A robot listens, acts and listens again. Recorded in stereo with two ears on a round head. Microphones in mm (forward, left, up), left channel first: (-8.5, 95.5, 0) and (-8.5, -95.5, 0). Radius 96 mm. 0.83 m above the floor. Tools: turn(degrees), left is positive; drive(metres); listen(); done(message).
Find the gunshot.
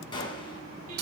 turn(degrees=25)
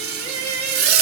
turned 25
listen()
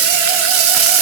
done("I heard a gunshot, but can't make it out now. It was about straight ahead or 130° left.")